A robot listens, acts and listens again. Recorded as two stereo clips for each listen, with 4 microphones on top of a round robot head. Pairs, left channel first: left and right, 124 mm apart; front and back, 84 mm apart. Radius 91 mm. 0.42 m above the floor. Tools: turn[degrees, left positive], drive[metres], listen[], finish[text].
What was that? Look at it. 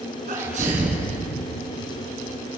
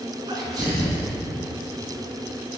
Thought: The sneeze: 125° right.
Action: turn[-125]
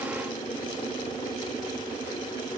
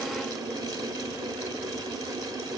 Action: finish[I heard a sneeze from this way, but can't make it out now.]